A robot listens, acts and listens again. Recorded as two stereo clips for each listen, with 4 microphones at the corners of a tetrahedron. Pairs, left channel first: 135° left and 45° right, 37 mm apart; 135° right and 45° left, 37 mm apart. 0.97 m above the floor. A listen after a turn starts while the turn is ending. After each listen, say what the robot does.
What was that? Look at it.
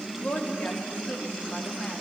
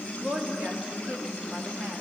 Turn 85° left.
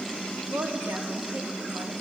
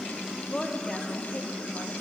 Turn 70° right.
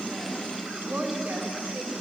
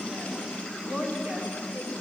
Turn 15° right.
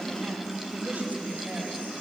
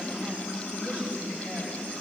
Keep listening.
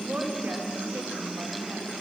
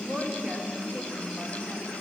Facing the woman speaking, 2 to 4 m away.